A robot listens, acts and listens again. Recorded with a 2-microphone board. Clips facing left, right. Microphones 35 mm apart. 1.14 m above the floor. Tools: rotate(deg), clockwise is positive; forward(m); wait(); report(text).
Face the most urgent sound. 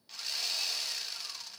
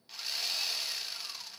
wait()
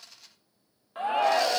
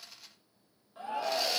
rotate(-60)
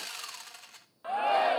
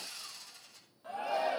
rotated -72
rotate(-50)
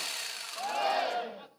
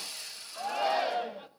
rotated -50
report("Found it: a shout, straight ahead.")